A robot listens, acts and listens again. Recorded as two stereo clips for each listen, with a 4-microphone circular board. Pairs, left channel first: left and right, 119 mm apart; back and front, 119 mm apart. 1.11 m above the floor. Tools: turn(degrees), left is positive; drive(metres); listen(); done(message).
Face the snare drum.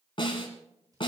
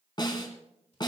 turn(degrees=130)
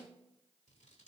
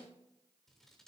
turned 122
turn(degrees=10)
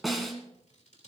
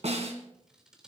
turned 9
done("Facing the snare drum, 2 to 4 m away.")